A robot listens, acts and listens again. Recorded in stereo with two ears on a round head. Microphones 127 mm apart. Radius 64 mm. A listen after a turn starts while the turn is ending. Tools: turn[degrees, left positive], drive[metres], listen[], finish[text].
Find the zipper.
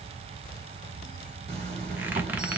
Thought: The zipper: about 50° right or 130° right.
Action: turn[-50]
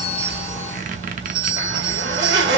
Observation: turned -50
Thought: So it is at 80° right.
Action: turn[-80]
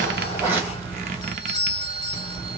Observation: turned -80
Thought: The zipper is now 15° right.
Action: turn[-15]
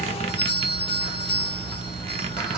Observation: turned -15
Action: finish[Found it: a zipper, straight ahead.]